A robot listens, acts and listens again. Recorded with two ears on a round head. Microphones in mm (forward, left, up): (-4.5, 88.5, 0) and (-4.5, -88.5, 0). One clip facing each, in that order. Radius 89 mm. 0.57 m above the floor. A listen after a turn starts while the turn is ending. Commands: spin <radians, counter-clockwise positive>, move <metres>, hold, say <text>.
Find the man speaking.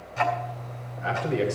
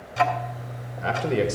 spin -1.05
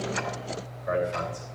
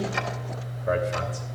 spin -0.87
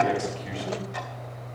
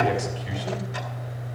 hold
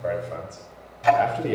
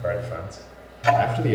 spin -0.17
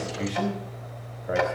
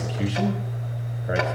say Found it: a man speaking, straight ahead, 2 to 4 m away.